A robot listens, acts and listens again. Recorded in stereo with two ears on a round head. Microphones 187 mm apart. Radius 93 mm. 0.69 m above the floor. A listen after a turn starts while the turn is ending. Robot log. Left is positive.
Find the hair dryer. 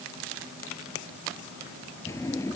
cmd idle
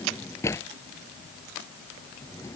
cmd idle
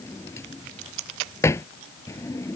end: I can't make out a hair dryer, only a drawer.